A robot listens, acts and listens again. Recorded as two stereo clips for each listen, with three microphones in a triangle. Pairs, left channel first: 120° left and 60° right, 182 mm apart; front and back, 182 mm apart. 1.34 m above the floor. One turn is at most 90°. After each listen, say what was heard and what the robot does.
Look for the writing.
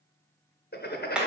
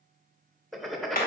The writing: 90° left. Turn 90° left.
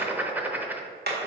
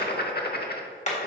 The writing is now 20° left. Turn 20° left.
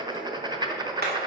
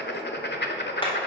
Facing the writing.